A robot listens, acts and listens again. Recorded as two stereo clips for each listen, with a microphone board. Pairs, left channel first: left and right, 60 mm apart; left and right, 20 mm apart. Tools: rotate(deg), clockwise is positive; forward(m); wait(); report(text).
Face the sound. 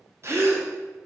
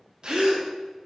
rotate(45)
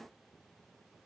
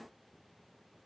wait()
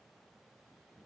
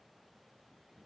report("I heard a gasp, but can't make it out now. It was about straight ahead or 90° right.")